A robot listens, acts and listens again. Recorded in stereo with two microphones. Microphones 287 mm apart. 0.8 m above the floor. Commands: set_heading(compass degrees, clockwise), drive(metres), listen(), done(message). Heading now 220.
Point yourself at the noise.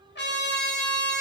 set_heading(185)
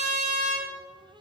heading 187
set_heading(77)
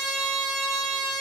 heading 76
done("Facing the trumpet, under 1 m away.")